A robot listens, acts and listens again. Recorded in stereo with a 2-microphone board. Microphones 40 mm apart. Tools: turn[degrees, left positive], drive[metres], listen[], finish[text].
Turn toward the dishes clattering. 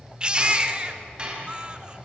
Thought: The dishes clattering: about 25° right or 155° right.
Action: turn[-25]
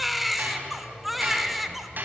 Thought: So it is at 130° right.
Action: turn[-130]
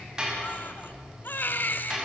Thought: The dishes clattering is now 20° right.
Action: turn[-20]
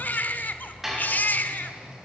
Thought: The dishes clattering is now 10° right.
Action: turn[-10]
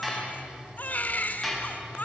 Action: finish[Facing the dishes clattering, over 4 m away.]